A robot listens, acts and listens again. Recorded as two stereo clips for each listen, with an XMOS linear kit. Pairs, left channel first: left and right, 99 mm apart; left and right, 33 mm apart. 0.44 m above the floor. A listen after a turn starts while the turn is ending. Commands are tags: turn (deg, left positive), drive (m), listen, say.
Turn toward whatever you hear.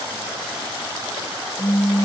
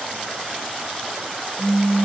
<turn deg="-30"/>
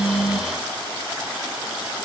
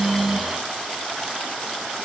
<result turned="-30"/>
<listen/>
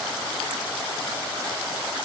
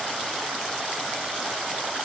<say>I heard a pop, but can't make it out now. It was about 15° left or 135° right.</say>